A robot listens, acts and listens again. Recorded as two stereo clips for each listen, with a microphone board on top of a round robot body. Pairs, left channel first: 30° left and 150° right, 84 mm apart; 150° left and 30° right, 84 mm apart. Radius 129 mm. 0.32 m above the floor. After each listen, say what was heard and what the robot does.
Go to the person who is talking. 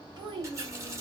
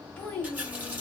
The child speaking: 135° right. Turn 135° right.
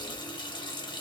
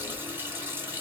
Keep listening.
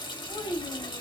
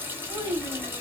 Drive 1.0 m forward.
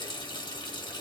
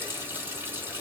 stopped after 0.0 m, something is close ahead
Keep listening.
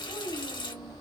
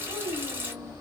The child speaking is now 10° right. Turn 10° right.
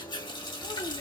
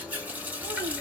Keep listening.
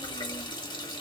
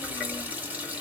Keep listening.
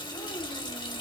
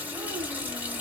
I heard a child speaking from this way, but can't make it out now. I did not reach it.